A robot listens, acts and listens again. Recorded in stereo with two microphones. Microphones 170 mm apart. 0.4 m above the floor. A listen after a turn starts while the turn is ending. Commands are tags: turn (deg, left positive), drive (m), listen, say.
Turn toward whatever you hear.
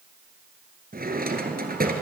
<turn deg="-60"/>
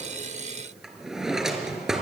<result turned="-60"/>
<say>Found it: a drawer, straight ahead, 1 to 2 m away.</say>